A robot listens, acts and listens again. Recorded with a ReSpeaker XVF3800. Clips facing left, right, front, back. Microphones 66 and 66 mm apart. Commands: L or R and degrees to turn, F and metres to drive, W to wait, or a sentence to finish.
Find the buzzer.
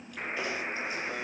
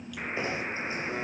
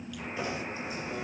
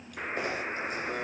L180
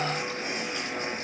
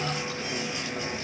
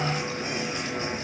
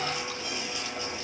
W
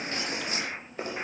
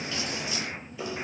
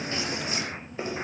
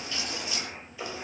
W
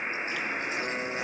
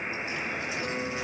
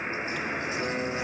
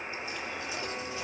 L15
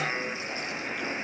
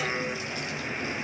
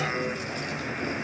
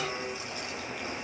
Found it: a buzzer, straight ahead.